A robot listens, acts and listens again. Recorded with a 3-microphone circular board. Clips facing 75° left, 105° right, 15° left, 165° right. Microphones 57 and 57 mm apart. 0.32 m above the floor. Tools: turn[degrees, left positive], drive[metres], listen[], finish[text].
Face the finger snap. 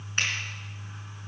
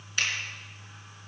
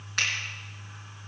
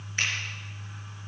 Thought: The finger snap: 20° left.
Action: turn[20]
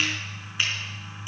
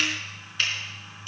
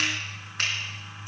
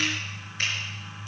Action: finish[Found it: a finger snap, straight ahead, over 4 m away.]